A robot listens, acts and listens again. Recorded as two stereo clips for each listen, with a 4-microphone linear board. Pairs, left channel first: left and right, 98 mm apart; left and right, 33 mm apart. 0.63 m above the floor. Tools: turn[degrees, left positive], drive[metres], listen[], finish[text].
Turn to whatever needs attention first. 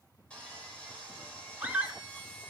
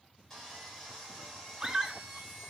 Thought: The scream: about 15° right or 165° right.
Action: turn[-15]
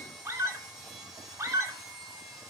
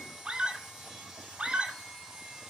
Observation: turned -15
Thought: So it is at 150° right.
Action: turn[-150]
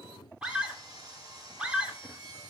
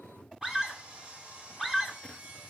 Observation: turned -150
Thought: The scream is now 15° right.
Action: turn[-15]
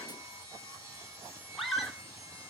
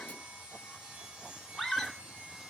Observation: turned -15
Action: finish[Facing the scream.]